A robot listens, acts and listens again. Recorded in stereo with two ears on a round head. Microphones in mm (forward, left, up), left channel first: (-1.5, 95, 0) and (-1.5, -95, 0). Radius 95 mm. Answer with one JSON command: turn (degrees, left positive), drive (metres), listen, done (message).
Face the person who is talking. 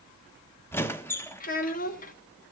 {"turn": 40}
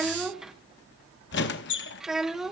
{"done": "Found it: a child speaking, straight ahead."}